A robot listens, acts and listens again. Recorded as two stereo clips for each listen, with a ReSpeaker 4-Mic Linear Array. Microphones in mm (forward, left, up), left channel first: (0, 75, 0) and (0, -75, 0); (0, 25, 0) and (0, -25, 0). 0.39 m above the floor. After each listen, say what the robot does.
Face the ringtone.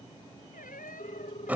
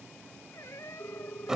Turn 40° left.
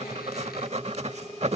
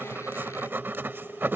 Found it: a ringtone, straight ahead.